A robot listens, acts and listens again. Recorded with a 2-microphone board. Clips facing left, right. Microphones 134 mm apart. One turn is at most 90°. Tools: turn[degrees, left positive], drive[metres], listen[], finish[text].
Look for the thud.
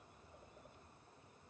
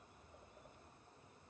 Action: listen[]
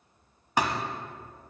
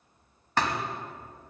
Action: turn[30]
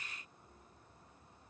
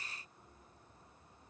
Action: listen[]
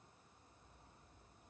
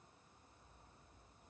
Action: finish[I heard a thud, but can't make it out now. It was about 20° right or 140° left.]